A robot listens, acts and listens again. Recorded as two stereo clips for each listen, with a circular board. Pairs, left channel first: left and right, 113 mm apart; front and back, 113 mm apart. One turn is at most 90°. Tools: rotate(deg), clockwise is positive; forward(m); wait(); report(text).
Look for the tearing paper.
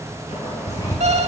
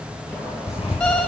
rotate(-35)
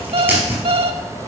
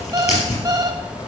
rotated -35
rotate(15)
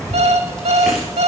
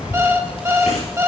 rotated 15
report("Facing the tearing paper.")